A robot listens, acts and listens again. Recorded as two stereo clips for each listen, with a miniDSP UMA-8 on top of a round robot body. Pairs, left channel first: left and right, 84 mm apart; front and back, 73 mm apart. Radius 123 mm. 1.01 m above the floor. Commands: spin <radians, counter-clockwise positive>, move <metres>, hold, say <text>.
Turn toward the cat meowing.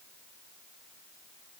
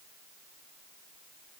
hold
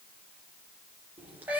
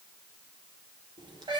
spin -2.79
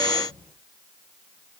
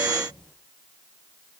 hold
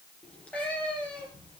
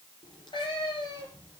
spin 0.26
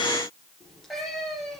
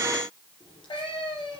say Found it: a cat meowing, straight ahead.